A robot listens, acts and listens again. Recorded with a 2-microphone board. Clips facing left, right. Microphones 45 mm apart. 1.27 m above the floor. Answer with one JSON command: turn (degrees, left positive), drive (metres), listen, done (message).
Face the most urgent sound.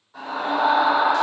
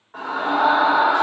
{"turn": -45}
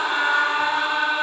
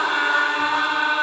{"done": "Facing the scream."}